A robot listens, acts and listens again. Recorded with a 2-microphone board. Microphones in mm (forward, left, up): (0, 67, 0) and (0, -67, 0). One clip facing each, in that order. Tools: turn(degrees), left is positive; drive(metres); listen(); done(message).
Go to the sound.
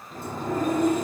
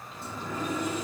turn(degrees=50)
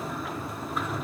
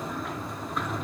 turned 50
drive(metres=1.0)
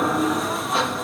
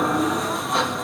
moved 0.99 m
drive(metres=1.0)
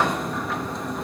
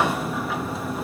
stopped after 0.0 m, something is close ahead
done("Arrived at the sliding door, straight ahead.")